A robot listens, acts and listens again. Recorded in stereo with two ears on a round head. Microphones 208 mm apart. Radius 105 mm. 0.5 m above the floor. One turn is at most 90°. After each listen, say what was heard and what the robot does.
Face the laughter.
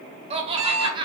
The laughter: about 20° right or 160° right. Turn 20° right.
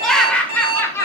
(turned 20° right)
So it is at 10° left. Turn 10° left.
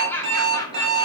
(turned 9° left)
The laughter is now 15° left. Turn 15° left.
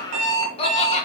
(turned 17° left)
The laughter is now 30° left. Turn 30° left.
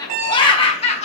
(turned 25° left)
The laughter is now 30° left. Turn 30° left.
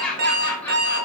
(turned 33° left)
Facing the laughter, 1 to 2 m away.